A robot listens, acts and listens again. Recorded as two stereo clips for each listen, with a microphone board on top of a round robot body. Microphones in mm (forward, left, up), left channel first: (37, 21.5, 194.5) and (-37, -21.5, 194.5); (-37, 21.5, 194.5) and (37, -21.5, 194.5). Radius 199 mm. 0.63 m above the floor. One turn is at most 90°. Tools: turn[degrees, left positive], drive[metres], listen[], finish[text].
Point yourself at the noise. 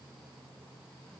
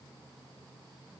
Action: listen[]
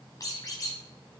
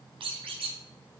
Thought: The squeak: 20° right.
Action: turn[-20]
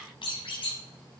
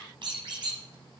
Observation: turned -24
Action: finish[Facing the squeak, 1 to 2 m away.]